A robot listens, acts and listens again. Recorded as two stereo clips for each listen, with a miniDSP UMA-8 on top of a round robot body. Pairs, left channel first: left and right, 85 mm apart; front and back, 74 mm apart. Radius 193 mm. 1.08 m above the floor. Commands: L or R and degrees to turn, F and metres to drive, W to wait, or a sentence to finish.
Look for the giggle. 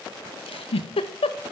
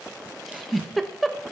L90
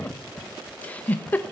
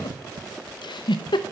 L15
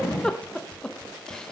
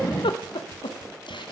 Facing the giggle.